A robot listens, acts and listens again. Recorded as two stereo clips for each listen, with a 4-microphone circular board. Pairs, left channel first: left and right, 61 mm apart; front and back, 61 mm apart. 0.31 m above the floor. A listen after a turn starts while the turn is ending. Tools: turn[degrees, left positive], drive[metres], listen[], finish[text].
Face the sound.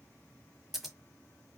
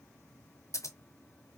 Action: finish[Found it: scissors, straight ahead, 1 to 2 m away.]